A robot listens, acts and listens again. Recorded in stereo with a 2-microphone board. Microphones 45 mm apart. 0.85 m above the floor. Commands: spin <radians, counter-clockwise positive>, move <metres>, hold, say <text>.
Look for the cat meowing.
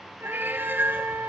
spin -0.87
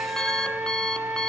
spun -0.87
hold
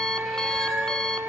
hold
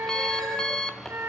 say I heard a cat meowing, but can't make it out now. It was about straight ahead or 80° right.